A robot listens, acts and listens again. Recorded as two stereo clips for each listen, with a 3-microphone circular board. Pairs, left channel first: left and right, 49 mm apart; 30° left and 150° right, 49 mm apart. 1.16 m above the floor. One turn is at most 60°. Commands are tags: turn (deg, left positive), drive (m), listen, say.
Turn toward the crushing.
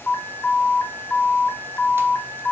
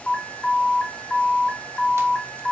<listen/>
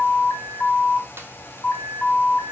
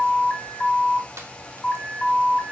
<listen/>
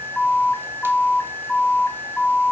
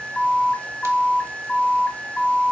<say>I can't make out crushing to turn to.</say>